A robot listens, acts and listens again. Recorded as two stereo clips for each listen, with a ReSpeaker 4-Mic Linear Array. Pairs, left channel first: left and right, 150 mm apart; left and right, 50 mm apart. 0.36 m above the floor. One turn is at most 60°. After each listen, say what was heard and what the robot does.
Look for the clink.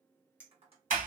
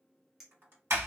Turn 30° right.
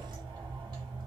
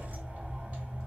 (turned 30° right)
Keep listening.
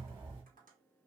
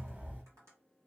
Keep listening.
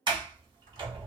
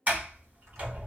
I heard a clink, but can't make it out now. It was about 20° left or 140° right.